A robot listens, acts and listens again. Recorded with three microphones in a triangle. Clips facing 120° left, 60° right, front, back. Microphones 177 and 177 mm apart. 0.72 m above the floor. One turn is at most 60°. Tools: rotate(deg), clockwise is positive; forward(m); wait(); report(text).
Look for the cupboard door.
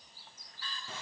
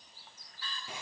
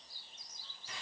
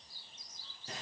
wait()
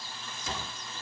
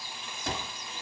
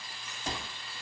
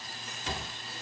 rotate(40)
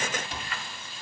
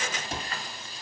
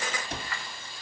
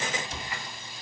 rotate(20)
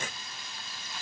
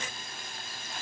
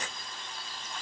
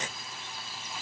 wait()
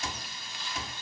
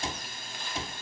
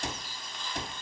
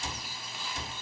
report("Facing the cupboard door.")